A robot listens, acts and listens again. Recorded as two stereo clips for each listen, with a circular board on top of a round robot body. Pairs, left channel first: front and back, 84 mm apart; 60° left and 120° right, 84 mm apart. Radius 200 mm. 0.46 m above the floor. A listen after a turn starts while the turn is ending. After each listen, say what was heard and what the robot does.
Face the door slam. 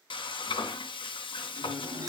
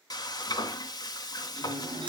The door slam: 135° right. Turn 135° right.
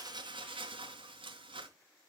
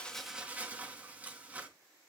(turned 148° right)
Nothing new. It was at 15° left. Turn 15° left.
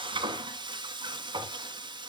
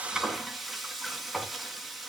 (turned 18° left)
Facing where the door slam came from. I can't hear it now.